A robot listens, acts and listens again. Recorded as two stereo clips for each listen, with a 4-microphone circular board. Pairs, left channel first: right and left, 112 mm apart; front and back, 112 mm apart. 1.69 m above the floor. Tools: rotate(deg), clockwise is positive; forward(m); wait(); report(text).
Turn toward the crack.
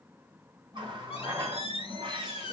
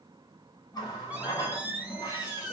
wait()
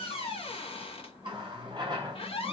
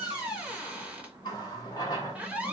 wait()
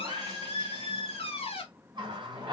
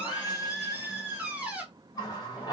report("I can't make out a crack to turn to.")